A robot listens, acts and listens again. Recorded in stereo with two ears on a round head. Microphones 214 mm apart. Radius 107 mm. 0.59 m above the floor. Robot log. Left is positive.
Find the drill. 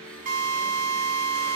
note: The drill: about 35° right or 145° right.
cmd yaw -35
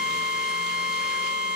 end: Facing the drill, 1 to 2 m away.